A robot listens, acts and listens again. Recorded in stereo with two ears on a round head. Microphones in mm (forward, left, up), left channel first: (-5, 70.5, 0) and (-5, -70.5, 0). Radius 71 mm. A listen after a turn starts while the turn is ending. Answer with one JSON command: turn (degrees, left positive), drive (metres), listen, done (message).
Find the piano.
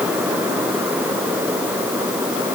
{"listen": true}
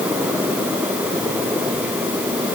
{"listen": true}
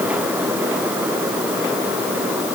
{"done": "I can't make out a piano."}